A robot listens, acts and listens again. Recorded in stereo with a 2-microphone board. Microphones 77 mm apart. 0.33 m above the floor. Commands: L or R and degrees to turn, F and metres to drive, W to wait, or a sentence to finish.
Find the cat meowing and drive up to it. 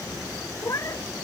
L45
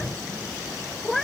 F1.0
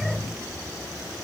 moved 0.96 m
W
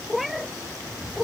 F1.0
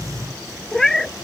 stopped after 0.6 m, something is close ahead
I am next to the cat meowing.